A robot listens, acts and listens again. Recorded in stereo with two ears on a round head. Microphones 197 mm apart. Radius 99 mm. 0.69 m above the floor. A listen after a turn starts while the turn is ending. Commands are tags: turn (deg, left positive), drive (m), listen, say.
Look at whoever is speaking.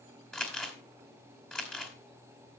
<listen/>
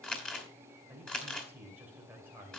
<turn deg="-30"/>
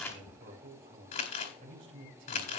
<turn deg="-140"/>
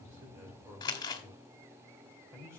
<turn deg="-15"/>
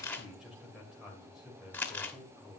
<say>Facing the man speaking, 2 to 4 m away.</say>